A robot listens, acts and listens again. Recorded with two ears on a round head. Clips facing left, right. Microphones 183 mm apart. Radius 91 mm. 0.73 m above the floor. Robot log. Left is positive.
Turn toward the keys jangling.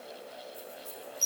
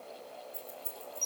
note: The keys jangling: about 60° right or 120° right.
cmd yaw -60
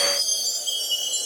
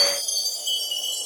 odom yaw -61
cmd idle
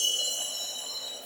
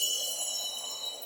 cmd idle
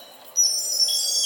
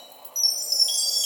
note: So it is at 45° right.
cmd yaw -45
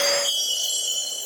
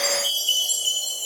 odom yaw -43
cmd idle
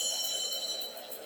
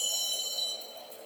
end: Found it: keys jangling, straight ahead.